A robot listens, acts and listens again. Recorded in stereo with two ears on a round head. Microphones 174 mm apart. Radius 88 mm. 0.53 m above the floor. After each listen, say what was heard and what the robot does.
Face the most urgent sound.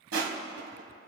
Keep listening.
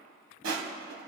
Keep listening.
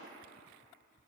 I can't make out anything urgent, only crushing.